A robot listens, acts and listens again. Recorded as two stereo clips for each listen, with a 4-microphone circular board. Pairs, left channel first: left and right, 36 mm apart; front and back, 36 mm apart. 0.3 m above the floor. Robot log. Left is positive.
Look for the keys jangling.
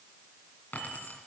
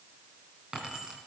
note: The keys jangling: 115° left.
cmd yaw +115
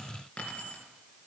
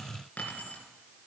note: The keys jangling is now 40° left.
cmd yaw +40
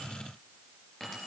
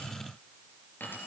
note: The keys jangling is now 10° left.
cmd yaw +10
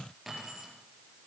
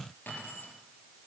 end: Found it: keys jangling, straight ahead, over 4 m away.